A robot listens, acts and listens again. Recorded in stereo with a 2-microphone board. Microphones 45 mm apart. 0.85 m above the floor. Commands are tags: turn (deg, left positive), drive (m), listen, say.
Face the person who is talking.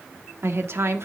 <turn deg="-70"/>
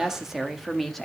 <say>Facing the woman speaking, 1 to 2 m away.</say>